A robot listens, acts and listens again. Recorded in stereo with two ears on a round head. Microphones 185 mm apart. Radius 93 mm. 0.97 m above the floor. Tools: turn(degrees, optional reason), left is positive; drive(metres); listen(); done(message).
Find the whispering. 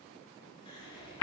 turn(degrees=25, reason="The whispering: about 25° left or 155° left.")
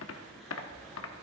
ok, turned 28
done("Found it: whispering, straight ahead.")